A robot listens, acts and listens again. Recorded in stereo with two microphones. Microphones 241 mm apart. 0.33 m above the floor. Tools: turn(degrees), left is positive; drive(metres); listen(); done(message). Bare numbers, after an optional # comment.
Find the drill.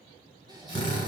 # The drill: about 50° right or 130° right.
turn(-50)
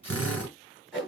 # So it is at 80° right.
turn(-80)
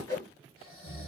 done("Facing the drill, 1 to 2 m away.")